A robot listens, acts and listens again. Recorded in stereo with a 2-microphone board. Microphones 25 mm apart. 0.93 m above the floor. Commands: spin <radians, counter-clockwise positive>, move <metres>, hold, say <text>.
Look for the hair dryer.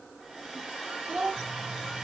spin -0.52
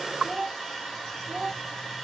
say Found it: a hair dryer, straight ahead.